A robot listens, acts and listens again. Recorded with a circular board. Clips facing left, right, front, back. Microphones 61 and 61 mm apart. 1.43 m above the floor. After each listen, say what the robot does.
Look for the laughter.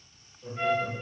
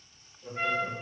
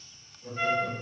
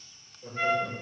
Turn 175° left.
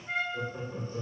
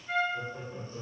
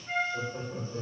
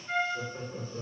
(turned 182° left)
Turn 15° left.
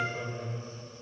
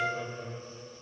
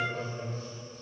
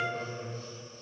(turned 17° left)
Turn 10° left.
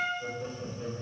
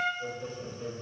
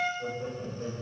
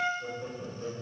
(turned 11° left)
Found it: laughter, straight ahead.